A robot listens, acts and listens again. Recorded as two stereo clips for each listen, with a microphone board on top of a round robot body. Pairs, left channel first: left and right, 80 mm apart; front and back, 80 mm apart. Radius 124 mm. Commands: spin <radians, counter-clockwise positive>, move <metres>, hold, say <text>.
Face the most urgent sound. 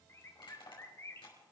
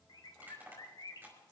hold
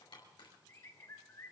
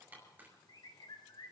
hold
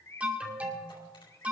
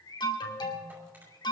spin -0.26
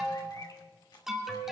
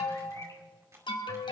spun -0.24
say Facing the alarm.